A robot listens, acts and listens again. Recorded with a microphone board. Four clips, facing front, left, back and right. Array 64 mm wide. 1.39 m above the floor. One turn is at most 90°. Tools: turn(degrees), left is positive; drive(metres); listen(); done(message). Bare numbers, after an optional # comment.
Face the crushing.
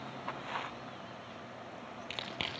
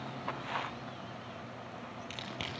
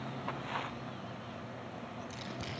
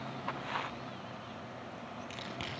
# The crushing: 10° left.
turn(10)
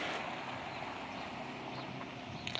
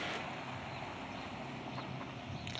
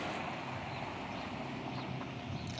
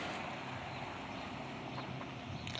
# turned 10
done("Facing the crushing, over 4 m away.")